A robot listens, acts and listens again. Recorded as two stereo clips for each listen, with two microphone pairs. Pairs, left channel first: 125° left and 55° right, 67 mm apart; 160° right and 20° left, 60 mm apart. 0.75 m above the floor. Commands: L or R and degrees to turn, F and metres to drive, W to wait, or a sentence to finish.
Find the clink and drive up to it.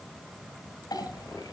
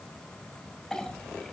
L120
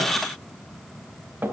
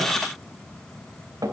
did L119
F1.0
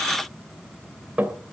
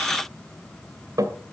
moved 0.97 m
L10
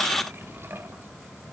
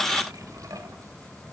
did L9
W
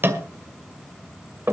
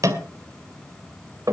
F1.0
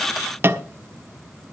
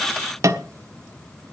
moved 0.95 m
F1.0
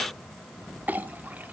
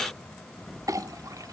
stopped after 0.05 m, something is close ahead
I am next to the clink.